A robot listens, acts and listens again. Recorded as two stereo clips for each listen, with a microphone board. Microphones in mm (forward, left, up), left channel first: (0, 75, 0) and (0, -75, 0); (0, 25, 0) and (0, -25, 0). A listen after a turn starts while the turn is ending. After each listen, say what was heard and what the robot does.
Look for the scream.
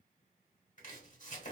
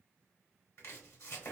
Keep listening.
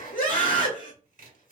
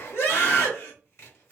The scream: about 60° left or 120° left. Turn 60° left.
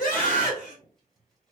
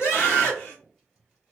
Keep listening.
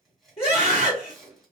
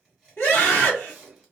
So it is at 45° left. Turn 45° left.
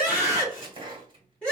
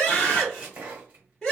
Found it: a scream, straight ahead.